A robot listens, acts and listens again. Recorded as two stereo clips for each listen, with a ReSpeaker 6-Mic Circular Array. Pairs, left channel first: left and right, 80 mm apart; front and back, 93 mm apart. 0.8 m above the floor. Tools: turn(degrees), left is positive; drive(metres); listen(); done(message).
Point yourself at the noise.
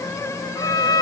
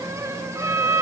turn(degrees=115)
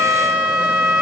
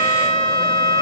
turn(degrees=-25)
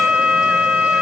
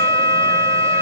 turn(degrees=-20)
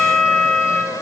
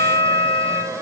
done("Found it: a violin, straight ahead, over 4 m away.")